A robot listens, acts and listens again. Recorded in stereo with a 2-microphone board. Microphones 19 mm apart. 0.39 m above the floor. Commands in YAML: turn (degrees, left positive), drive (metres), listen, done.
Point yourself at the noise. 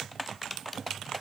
listen: true
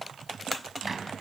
turn: -30
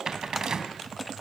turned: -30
turn: -140
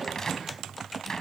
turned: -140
turn: 30
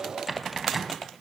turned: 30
turn: -10
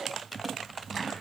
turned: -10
done: "Facing the cupboard door, 2 to 4 m away."